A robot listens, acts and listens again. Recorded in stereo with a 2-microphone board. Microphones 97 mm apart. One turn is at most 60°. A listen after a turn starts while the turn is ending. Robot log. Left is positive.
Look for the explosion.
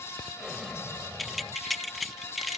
cmd yaw -30
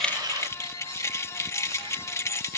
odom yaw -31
cmd idle
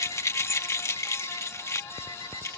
end: I heard an explosion, but can't make it out now. It was about 30° left or 145° right.